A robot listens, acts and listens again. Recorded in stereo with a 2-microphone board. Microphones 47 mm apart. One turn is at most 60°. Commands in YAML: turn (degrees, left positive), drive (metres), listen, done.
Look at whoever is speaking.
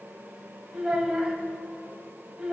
turn: -20
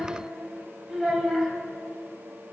done: "Found it: a child speaking, straight ahead."